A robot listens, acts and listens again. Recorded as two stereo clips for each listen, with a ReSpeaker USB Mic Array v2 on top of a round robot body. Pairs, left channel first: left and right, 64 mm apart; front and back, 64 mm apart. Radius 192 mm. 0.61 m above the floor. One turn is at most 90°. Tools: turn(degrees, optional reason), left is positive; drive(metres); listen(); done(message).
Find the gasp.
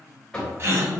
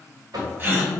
turn(degrees=-90, reason="The gasp: 130° right.")
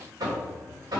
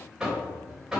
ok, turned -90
turn(degrees=-40, reason="Nothing new. It was at 40° right.")
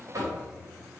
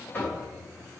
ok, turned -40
done("I heard a gasp from this way, but can't make it out now.")